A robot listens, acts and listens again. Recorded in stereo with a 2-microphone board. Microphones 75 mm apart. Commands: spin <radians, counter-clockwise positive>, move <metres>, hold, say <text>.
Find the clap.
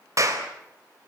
spin -0.79
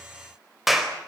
say Found it: a clap, straight ahead, 2 to 4 m away.